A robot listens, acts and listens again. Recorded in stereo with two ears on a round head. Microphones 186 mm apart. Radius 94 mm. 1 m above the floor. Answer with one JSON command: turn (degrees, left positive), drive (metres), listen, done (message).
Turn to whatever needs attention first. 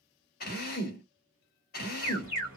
{"turn": 90}
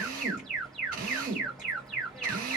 {"done": "Facing the alarm."}